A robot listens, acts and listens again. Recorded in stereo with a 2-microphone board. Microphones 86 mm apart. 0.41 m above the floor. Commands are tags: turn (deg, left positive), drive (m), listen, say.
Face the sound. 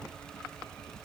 <listen/>
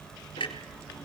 <turn deg="90"/>
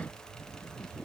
<say>I heard a clunk from this way, but can't make it out now.</say>